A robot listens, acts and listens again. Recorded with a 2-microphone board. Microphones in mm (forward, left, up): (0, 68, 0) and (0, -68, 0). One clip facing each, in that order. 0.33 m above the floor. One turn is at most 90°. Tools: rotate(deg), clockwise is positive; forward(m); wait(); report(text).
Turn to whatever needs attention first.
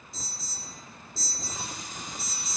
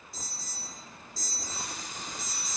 rotate(45)
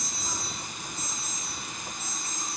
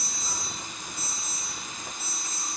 rotate(15)
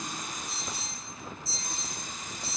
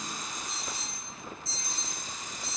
report("Facing the alarm, 2 to 4 m away.")